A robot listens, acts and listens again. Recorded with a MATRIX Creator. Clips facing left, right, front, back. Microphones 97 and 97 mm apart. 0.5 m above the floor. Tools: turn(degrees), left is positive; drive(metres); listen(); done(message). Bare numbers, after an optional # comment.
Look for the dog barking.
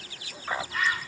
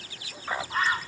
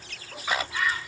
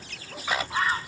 listen()
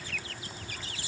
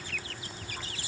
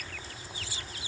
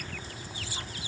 listen()
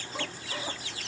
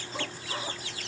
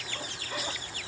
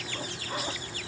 done("I can't make out a dog barking to turn to.")